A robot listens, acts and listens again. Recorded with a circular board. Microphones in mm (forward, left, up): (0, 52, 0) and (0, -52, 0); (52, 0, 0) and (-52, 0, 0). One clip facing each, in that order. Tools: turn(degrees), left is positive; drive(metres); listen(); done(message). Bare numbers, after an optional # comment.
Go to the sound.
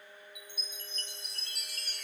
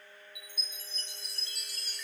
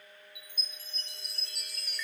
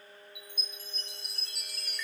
# The chime: 90° left.
turn(90)
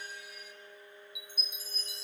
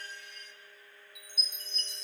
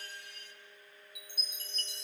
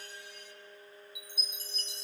drive(1.0)
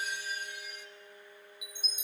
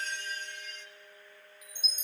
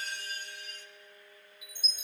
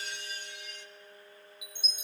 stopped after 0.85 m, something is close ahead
# The chime is now 15° left.
turn(15)
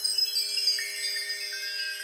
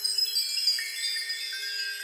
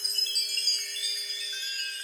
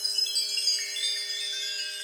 done("I am next to the chime.")